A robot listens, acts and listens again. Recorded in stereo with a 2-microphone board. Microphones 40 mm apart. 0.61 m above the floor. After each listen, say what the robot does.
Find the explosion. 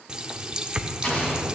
Turn 25° left.
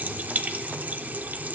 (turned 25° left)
Keep listening.
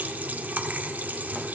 I heard an explosion, but can't make it out now. It was about straight ahead or 130° left.